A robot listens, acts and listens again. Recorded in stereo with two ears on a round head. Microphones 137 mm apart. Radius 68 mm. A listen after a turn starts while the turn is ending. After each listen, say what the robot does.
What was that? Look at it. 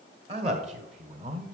Turn 50° right.
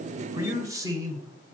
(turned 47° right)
Turn 25° right.
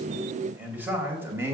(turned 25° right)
Turn 15° right.
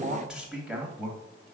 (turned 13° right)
Turn 10° right.
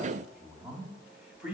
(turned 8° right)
Facing the man speaking.